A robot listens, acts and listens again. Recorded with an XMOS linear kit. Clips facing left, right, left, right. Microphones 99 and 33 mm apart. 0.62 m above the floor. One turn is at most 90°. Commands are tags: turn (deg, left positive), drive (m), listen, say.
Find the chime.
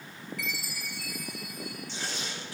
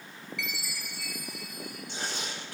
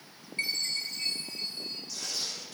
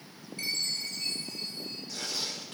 <turn deg="45"/>
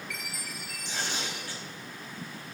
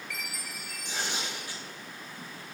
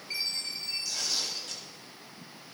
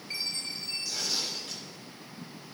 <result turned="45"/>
<say>Found it: a chime, straight ahead.</say>